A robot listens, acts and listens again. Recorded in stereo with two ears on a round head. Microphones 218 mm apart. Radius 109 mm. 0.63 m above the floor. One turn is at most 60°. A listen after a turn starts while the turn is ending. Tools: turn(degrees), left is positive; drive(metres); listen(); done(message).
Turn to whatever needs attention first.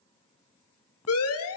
turn(degrees=60)
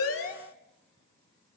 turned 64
listen()
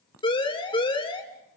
turn(degrees=25)
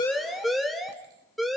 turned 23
done("Found it: a siren, straight ahead, 2 to 4 m away.")